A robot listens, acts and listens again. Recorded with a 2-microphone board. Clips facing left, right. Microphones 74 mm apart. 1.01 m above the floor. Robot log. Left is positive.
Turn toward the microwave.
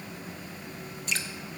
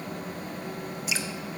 cmd idle
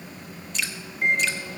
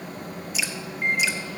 note: The microwave: about 70° left or 110° left.
cmd yaw +70
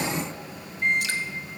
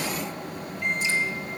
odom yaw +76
note: So it is at 35° left.
cmd yaw +35
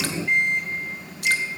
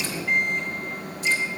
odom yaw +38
end: Found it: a microwave, straight ahead, 2 to 4 m away.